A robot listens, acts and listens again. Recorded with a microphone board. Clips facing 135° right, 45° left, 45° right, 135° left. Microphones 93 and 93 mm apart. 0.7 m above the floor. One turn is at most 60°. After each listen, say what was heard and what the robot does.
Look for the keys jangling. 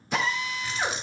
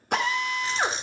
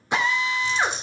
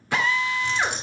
The keys jangling: 105° left. Turn 60° left.
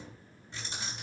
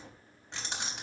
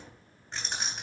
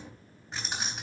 The keys jangling is now 45° left. Turn 45° left.
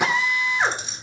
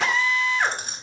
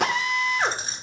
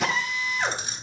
Facing the keys jangling, 2 to 4 m away.